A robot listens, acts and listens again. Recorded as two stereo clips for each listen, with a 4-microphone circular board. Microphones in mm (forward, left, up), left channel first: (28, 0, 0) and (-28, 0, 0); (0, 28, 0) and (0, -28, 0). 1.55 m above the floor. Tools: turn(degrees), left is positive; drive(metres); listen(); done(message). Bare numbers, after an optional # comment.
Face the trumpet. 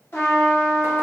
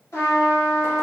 # The trumpet: 45° left.
turn(45)
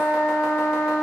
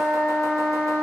done("Facing the trumpet.")